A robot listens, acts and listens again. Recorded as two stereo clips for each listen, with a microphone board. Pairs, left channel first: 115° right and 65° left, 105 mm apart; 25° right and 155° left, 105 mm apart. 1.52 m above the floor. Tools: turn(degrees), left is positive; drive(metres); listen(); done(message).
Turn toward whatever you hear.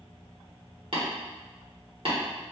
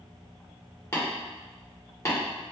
turn(degrees=35)
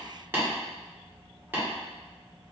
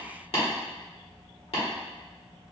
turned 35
done("Found it: tapping, straight ahead, 1 to 2 m away.")